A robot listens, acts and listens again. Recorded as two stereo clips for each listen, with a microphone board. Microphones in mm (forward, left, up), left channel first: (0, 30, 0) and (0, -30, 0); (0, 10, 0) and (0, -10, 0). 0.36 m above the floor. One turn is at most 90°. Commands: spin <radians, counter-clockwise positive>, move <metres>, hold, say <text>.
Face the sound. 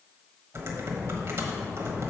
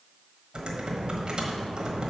spin -0.87
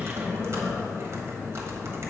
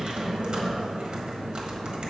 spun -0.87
spin -1.22
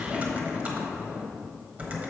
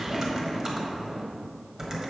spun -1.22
spin -0.52
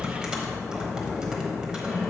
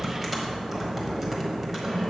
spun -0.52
spin -0.26
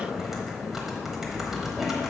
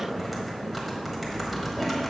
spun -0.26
say Facing the typing on a keyboard, 1 to 2 m away.